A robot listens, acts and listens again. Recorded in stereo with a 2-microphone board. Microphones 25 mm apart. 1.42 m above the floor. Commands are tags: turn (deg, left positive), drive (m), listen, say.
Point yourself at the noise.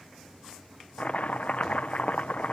<turn deg="65"/>
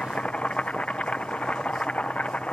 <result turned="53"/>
<turn deg="60"/>
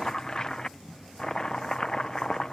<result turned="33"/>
<turn deg="30"/>
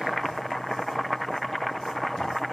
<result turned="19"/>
<turn deg="10"/>
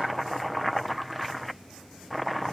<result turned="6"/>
<say>Facing the chopping.</say>